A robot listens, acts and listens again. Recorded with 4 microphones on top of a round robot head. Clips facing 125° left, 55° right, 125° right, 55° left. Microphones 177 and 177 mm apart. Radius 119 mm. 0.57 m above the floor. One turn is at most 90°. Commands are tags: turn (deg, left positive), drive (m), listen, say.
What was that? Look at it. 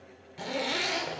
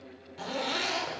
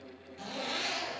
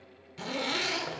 <turn deg="55"/>
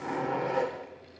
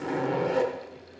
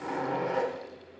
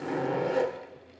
<say>Found it: a zipper, straight ahead.</say>